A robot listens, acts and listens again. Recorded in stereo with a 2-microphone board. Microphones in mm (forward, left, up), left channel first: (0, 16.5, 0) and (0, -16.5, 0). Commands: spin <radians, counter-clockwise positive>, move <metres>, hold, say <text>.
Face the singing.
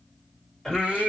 spin 0.52
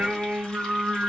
spin -0.52
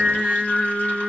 spin -0.35
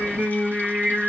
spin -0.35
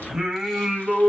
spin -0.35
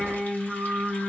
say Facing the singing, 1 to 2 m away.